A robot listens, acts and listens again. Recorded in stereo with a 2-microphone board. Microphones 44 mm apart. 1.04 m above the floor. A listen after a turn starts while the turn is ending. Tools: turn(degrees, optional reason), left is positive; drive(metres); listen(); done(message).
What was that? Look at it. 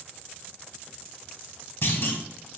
turn(degrees=50, reason="The clunk: about 50° left or 130° left.")
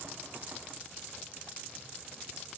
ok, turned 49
listen()
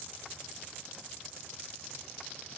done("I heard a clunk, but can't make it out now. It was about straight ahead or 80° left.")